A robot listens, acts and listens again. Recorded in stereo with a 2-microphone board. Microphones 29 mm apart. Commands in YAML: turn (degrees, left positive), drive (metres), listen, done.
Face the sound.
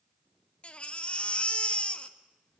turn: 50
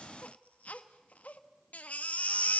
turn: 75
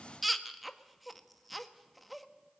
done: "Found it: a baby crying, straight ahead."